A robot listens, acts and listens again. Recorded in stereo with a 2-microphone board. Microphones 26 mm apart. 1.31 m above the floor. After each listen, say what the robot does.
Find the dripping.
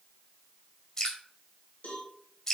Turn 30° left.
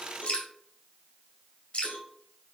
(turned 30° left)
Turn 140° left.
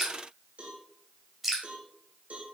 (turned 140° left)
Found it: dripping, straight ahead.